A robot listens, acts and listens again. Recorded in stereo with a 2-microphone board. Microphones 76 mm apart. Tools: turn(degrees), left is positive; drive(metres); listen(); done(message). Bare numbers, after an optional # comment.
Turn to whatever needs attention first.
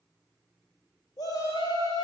# The shout: about 60° left or 120° left.
turn(60)
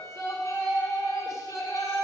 # So it is at 50° left.
turn(50)
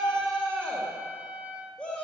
# The shout is now 15° left.
turn(15)
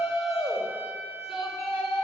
done("Facing the shout.")